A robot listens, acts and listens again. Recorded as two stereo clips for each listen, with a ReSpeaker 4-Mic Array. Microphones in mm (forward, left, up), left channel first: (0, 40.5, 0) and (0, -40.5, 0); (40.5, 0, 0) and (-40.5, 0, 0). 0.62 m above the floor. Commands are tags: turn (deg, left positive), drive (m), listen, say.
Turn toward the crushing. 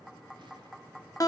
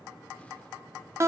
<listen/>
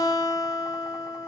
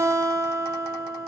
<listen/>
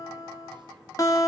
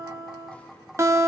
<say>I can't make out crushing, only a guitar.</say>